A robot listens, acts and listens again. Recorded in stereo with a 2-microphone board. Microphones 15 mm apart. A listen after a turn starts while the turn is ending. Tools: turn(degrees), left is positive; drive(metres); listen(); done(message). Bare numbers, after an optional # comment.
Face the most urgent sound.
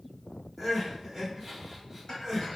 # The crying: about 20° right or 160° right.
turn(-20)
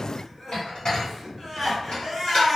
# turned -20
done("Facing the crying, 1 to 2 m away.")